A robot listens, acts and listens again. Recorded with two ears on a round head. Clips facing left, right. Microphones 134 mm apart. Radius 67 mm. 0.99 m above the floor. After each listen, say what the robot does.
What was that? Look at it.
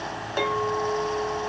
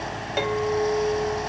Turn 20° right.
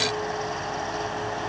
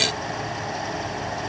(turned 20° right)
Keep listening.
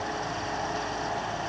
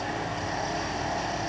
Keep listening.
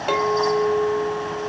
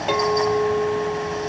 Found it: a clink, straight ahead.